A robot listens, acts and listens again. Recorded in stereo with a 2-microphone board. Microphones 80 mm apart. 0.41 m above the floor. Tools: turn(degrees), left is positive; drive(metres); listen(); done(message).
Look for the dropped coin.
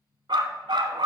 listen()
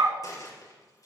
turn(degrees=45)
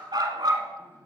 listen()
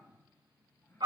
done("I heard a dropped coin, but can't make it out now. It was about straight ahead or 90° left.")